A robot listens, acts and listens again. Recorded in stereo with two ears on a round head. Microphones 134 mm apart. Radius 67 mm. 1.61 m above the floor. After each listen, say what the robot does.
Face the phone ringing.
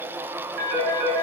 Turn 60° right.
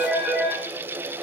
Found it: a phone ringing, straight ahead, over 4 m away.